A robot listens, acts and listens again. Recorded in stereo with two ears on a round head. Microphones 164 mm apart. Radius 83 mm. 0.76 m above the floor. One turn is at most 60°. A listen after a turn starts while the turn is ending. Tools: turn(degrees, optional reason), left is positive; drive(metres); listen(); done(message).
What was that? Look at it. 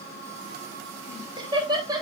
turn(degrees=-25, reason="The laughter: about 25° right or 155° right.")
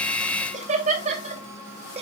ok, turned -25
turn(degrees=-35, reason="The laughter: about 35° right or 145° right.")
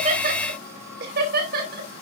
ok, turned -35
turn(degrees=-60, reason="So it is at 125° right.")
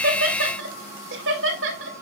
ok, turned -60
turn(degrees=-60, reason="The laughter is now 70° right.")
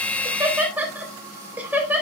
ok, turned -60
turn(degrees=-10, reason="The laughter is now 10° right.")
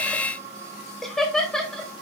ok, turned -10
done("Found it: laughter, straight ahead.")